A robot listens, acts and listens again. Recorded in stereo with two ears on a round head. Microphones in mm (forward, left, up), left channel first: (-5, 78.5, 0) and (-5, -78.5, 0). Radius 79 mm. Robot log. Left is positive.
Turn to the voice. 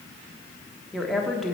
cmd yaw +30
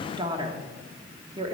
note: So it is at 30° right.
cmd yaw -30
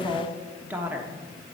note: The woman speaking is now 10° right.
cmd yaw -10
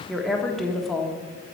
end: Found it: a woman speaking, straight ahead.